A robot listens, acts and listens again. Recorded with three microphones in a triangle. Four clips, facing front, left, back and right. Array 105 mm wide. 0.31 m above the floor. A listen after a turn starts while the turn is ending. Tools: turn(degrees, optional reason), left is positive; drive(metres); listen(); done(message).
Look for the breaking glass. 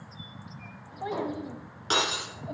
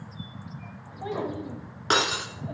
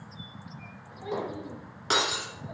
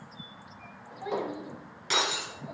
turn(degrees=100, reason="The breaking glass: 100° left.")
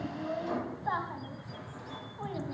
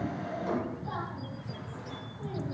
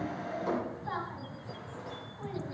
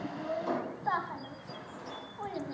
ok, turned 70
turn(degrees=30, reason="Nothing new. It was at 30° left.")
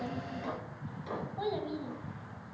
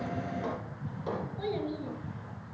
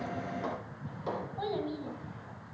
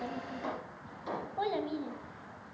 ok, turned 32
done("Facing where the breaking glass came from. I can't hear it now.")